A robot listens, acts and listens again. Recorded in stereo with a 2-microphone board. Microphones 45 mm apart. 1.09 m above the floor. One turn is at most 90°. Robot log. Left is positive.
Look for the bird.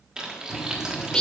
note: The bird: about 15° left or 165° left.
cmd yaw +15
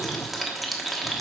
note: So it is at 150° left.
cmd yaw +90
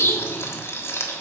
note: The bird is now 65° left.
cmd yaw +65
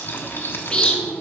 note: The bird is now 20° left.
cmd yaw +20
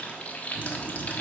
end: Found it: a bird, straight ahead, under 1 m away.